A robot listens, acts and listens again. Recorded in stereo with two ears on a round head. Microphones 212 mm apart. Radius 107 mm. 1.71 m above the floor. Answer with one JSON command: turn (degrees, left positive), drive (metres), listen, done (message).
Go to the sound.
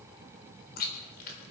{"turn": 40}
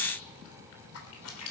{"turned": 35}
{"turn": 100}
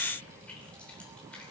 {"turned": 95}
{"listen": true}
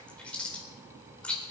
{"drive": 1.0}
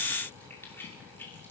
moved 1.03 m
{"turn": 10}
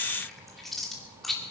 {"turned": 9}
{"drive": 1.0}
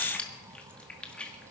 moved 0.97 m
{"drive": 1.0}
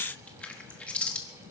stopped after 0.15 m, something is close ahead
{"done": "I am next to the chewing."}